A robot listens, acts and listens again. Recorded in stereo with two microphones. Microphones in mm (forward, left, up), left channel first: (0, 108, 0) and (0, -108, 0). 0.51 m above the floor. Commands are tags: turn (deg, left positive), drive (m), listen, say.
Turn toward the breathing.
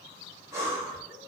<turn deg="-30"/>
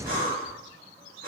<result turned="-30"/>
<turn deg="-140"/>
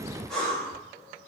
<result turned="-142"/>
<say>Facing the breathing.</say>